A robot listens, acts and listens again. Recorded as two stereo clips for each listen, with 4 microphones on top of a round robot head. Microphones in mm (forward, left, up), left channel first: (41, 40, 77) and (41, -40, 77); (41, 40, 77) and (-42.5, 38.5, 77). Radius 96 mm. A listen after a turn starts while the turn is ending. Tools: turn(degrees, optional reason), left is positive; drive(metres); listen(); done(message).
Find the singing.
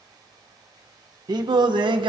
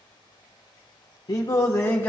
turn(degrees=-70, reason="The singing: 70° right.")
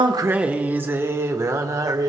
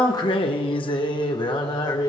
turn(degrees=-45, reason="The singing is now 45° right.")
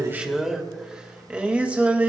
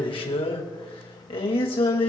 turn(degrees=-20, reason="The singing is now 20° right.")
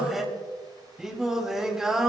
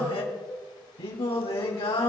done("Facing the singing.")